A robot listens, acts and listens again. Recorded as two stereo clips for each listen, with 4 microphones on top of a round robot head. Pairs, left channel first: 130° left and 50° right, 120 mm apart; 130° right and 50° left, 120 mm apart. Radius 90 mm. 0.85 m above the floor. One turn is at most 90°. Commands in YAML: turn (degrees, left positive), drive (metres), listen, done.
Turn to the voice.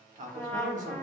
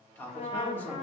turn: -55
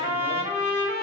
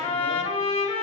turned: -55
listen: true
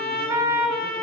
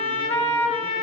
listen: true
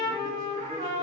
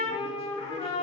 done: "I heard a man speaking from this way, but can't make it out now."